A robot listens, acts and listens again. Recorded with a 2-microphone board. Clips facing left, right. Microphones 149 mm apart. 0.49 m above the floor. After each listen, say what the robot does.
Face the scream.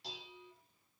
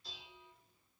Keep listening.
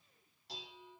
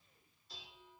Keep listening.
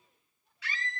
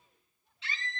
Turn 25° right.
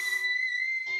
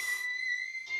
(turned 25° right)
Turn 130° right.
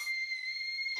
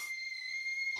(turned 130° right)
Turn 45° right.
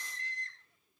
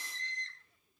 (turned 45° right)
Found it: a scream, straight ahead, over 4 m away.